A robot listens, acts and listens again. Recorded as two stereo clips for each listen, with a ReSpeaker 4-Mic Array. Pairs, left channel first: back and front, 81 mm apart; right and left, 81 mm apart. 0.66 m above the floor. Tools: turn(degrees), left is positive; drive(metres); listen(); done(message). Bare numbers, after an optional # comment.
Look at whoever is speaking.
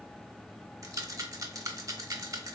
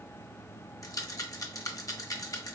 listen()
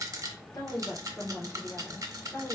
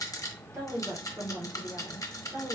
# The woman speaking: 125° left.
turn(125)
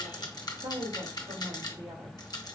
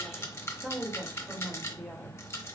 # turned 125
done("Found it: a woman speaking, straight ahead, 2 to 4 m away.")